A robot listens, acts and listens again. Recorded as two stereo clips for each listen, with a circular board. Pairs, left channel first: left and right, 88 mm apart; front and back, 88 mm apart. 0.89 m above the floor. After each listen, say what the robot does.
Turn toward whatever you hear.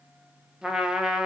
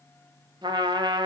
Turn 170° right.
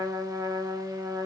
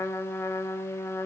Turn 55° right.
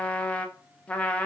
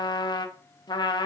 Turn 15° left.
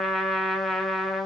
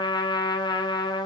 Facing the trumpet, 1 to 2 m away.